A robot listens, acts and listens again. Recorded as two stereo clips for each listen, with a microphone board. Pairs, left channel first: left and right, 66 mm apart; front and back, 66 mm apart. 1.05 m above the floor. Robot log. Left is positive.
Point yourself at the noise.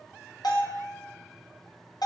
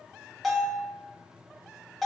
note: The bell: 85° left.
cmd yaw +85
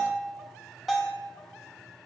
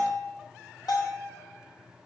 end: Found it: a bell, straight ahead, under 1 m away.